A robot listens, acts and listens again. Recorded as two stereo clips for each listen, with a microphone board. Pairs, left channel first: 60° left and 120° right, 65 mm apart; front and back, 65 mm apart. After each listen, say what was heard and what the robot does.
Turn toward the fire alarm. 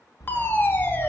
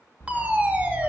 The fire alarm: 115° left. Turn 115° left.
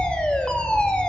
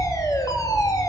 The fire alarm is now 10° right. Turn 10° right.
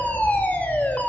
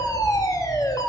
Found it: a fire alarm, straight ahead, 2 to 4 m away.